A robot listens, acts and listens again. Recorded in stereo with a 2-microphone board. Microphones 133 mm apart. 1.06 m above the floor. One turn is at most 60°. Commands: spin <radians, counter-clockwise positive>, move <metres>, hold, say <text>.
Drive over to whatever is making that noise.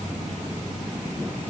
hold
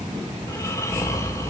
spin 0.44
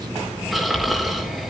move 1.0
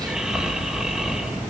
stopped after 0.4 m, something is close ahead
say Something is in my way. I am facing the snoring but have not reached it.